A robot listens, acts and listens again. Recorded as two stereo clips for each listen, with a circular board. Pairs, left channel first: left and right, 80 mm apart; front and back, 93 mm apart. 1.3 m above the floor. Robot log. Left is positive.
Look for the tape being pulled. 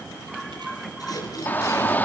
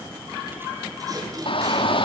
note: The tape being pulled: 130° left.
cmd yaw +130
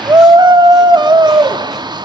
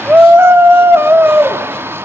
cmd idle
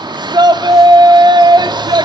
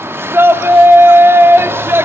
cmd idle
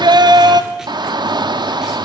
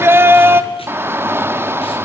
end: I heard tape being pulled from this way, but can't make it out now.